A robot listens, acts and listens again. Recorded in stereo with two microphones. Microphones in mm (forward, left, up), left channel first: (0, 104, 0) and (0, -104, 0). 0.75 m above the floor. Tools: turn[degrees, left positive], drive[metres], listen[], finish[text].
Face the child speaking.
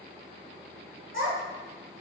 Action: turn[-90]
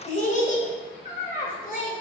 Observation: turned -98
Thought: So it is at 50° left.
Action: turn[50]
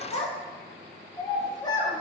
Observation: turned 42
Thought: The child speaking is now 20° left.
Action: turn[20]
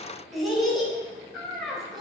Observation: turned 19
Action: finish[Found it: a child speaking, straight ahead, 2 to 4 m away.]